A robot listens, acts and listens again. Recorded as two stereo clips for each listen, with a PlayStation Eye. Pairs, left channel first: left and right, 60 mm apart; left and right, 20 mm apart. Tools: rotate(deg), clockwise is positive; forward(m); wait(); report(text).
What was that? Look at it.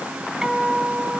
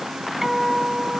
rotate(15)
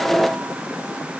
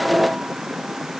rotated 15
wait()
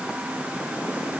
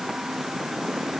wait()
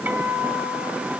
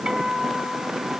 rotate(150)
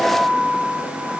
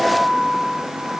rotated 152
report("Facing the guitar, 2 to 4 m away.")